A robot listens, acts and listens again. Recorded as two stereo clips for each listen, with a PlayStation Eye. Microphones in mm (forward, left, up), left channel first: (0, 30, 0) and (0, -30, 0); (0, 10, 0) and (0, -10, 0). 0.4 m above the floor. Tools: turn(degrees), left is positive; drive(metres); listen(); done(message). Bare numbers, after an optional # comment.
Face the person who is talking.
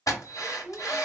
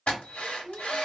turn(-30)
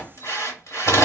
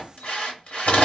listen()
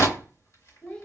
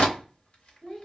# So it is at 15° left.
turn(15)
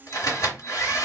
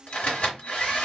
listen()
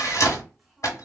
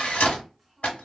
done("Found it: a child speaking, straight ahead.")